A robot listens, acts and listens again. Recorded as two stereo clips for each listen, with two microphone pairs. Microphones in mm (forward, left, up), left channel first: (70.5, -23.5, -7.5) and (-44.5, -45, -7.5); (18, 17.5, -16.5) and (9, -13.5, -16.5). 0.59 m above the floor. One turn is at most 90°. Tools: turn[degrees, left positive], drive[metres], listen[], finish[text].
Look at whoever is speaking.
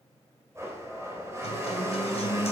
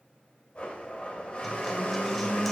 Action: listen[]
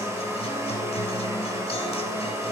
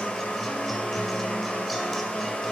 Action: listen[]
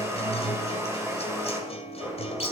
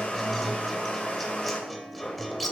Action: finish[I can't make out anyone speaking to turn to.]